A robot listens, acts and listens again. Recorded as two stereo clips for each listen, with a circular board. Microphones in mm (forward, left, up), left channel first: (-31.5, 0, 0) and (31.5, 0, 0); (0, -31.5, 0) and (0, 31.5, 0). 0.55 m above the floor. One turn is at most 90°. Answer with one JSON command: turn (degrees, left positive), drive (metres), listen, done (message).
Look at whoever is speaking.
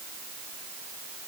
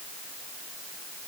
{"listen": true}
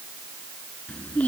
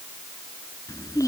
{"turn": -90}
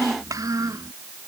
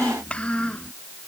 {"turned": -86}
{"turn": -20}
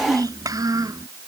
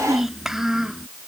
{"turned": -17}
{"done": "Facing the child speaking."}